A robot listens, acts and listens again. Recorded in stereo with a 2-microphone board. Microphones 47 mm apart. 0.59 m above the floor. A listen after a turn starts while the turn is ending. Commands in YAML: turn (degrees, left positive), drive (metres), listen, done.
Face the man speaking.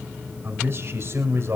turn: -70
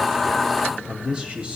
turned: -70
turn: -25
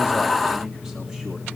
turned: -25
listen: true
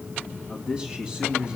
turn: -25
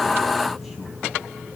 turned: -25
listen: true
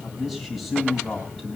done: "Facing the man speaking, over 4 m away."